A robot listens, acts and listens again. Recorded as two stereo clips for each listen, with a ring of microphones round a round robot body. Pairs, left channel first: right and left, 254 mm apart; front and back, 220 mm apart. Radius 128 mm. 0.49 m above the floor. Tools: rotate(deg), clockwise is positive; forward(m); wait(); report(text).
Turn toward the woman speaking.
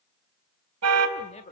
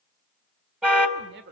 rotate(145)
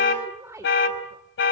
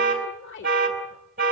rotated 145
rotate(-15)
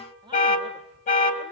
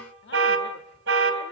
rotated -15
rotate(-20)
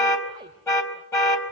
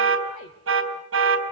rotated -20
wait()
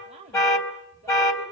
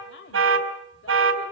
rotate(-25)
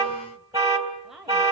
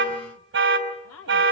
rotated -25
report("Facing the woman speaking.")